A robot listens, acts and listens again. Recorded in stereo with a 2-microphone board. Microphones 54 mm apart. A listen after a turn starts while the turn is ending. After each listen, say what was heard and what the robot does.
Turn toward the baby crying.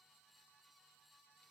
Keep listening.
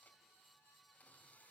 Keep listening.
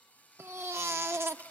The baby crying: about 55° right or 125° right. Turn 55° right.
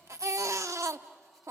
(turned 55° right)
So it is at 70° right. Turn 70° right.
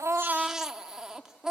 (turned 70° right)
The baby crying is now 10° right. Turn 10° right.
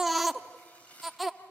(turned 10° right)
Found it: a baby crying, straight ahead.